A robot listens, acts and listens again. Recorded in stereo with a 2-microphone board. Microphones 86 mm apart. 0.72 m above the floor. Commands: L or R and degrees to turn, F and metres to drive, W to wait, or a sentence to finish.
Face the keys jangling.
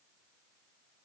W
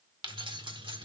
R75
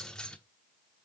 L10
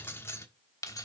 L45
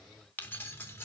L30
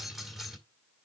Facing the keys jangling, 1 to 2 m away.